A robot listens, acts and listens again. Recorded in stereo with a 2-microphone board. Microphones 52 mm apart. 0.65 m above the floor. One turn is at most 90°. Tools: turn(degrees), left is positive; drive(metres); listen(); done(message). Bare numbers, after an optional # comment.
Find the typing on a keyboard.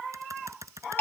turn(-90)
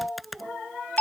done("Found it: typing on a keyboard, straight ahead.")